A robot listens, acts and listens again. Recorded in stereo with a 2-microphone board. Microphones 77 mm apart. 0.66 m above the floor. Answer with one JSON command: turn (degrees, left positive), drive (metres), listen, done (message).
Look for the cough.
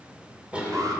{"turn": -30}
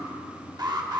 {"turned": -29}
{"listen": true}
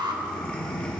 {"turn": 15}
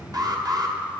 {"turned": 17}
{"listen": true}
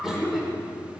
{"done": "Facing the cough."}